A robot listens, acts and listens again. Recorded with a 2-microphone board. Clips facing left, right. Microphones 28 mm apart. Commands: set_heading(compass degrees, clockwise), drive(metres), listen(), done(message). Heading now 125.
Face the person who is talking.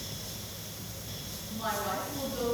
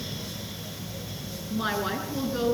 set_heading(160)
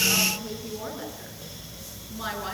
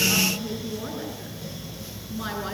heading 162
done("Facing the woman speaking.")